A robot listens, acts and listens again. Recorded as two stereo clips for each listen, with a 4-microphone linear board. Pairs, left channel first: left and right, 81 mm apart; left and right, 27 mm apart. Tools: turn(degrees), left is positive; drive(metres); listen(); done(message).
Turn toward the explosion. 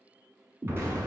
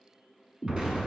turn(degrees=-35)
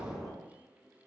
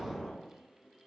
done("Found it: an explosion, straight ahead.")